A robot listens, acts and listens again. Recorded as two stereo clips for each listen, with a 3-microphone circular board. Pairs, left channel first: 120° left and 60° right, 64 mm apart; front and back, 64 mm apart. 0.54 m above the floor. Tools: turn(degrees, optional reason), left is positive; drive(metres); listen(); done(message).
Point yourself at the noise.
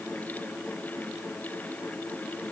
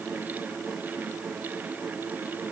listen()
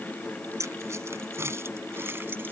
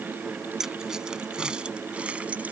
turn(degrees=-105, reason="The keys jangling: 105° right.")
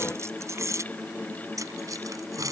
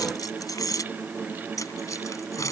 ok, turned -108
turn(degrees=-30, reason="The keys jangling is now 30° right.")
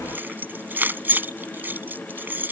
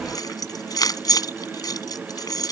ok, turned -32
done("Facing the keys jangling.")